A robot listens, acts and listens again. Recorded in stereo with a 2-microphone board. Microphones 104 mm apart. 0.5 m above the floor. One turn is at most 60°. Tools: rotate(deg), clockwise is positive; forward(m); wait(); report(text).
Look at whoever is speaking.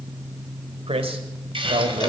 rotate(60)
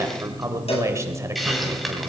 rotate(30)
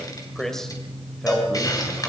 report("Facing the man speaking.")